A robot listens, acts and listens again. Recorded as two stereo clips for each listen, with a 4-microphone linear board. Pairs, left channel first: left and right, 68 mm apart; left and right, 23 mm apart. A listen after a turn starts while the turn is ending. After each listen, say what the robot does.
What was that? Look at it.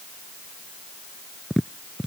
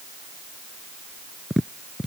Turn 30° left.
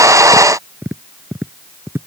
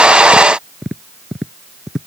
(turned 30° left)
Turn 30° right.
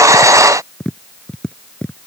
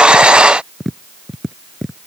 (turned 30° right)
Turn 10° left.
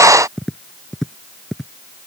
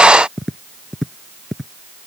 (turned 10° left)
Facing the tapping.